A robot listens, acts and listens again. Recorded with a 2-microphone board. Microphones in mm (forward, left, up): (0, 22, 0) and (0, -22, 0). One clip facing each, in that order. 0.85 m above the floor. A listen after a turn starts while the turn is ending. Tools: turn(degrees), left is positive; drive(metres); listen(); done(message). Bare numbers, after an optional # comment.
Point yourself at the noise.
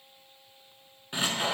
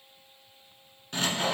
# The sawing: about 20° left or 160° left.
turn(20)
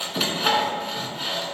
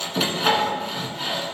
done("Found it: sawing, straight ahead, 1 to 2 m away.")